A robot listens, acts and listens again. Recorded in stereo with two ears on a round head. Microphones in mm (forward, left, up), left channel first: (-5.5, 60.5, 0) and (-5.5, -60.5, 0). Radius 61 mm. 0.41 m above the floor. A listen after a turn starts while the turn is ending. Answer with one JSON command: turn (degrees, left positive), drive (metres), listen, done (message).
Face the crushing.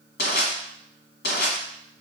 {"turn": 90}
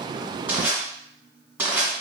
{"turn": -15}
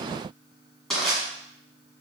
{"done": "Found it: crushing, straight ahead, 1 to 2 m away."}